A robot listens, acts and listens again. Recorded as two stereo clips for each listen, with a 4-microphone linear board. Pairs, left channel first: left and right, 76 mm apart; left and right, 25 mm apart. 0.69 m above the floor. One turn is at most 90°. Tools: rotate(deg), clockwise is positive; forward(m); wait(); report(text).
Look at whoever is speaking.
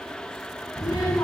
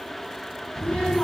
rotate(-60)
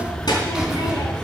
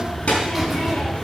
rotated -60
rotate(-60)
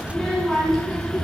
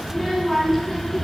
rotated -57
report("Found it: a child speaking, straight ahead.")